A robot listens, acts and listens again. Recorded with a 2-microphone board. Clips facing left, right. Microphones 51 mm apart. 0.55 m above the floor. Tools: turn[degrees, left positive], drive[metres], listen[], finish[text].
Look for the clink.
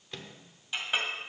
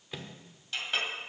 Action: turn[30]
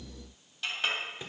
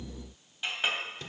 Thought: So it is at 15° right.
Action: turn[-15]
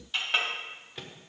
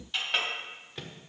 Action: finish[Found it: a clink, straight ahead.]